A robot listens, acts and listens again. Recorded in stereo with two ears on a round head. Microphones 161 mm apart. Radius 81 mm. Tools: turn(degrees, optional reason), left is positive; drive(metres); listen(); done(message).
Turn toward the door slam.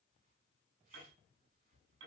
listen()
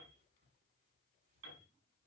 listen()
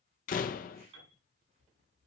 turn(degrees=50, reason="The door slam: about 50° left or 130° left.")
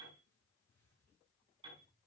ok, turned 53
listen()
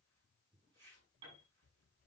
done("I heard a door slam, but can't make it out now. It was about 5° right or 80° left.")